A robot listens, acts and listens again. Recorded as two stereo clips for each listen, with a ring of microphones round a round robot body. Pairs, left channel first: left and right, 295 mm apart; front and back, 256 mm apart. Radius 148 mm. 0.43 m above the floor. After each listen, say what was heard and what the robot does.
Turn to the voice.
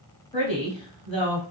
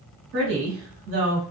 The woman speaking: 160° left. Turn 160° left.
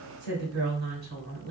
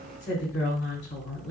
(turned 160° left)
The woman speaking is now 45° right. Turn 45° right.
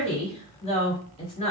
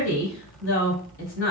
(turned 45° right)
The woman speaking is now 25° left. Turn 25° left.
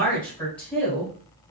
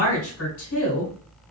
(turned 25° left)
Found it: a woman speaking, straight ahead.